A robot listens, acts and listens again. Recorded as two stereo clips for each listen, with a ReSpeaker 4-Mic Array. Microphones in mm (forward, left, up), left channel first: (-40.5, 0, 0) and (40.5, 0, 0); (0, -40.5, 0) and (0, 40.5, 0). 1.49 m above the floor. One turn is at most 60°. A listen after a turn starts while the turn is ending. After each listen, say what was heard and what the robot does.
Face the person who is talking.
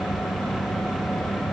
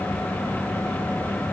Keep listening.
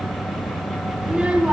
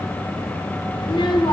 The child speaking: 75° right. Turn 60° right.
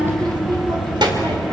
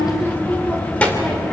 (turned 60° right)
The child speaking is now 15° right. Turn 15° right.
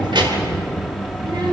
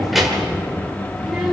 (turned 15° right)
The child speaking is now 10° left. Turn 10° left.
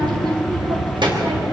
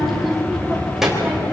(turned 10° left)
Facing the child speaking, 2 to 4 m away.